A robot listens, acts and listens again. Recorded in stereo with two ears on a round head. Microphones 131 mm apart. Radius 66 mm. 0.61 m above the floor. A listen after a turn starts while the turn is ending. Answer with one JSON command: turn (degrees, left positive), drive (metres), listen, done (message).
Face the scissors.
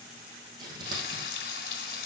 {"turn": -30}
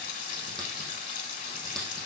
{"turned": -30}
{"done": "Facing the scissors, over 4 m away."}